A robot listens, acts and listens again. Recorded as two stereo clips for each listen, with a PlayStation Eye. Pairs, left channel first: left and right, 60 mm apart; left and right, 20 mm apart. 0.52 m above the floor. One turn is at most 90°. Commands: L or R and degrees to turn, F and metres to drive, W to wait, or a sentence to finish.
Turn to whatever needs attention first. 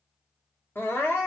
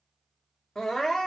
L35
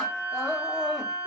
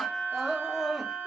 L10
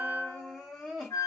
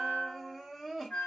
Facing the crying.